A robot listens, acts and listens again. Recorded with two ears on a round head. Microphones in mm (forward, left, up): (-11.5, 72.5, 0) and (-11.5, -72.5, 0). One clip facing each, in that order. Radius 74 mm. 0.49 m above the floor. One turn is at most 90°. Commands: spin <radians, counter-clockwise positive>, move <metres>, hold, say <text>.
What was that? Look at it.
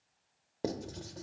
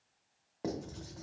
spin 0.61
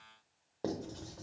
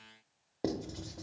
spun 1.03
spin -0.35
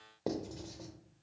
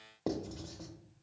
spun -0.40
say Facing the writing, under 1 m away.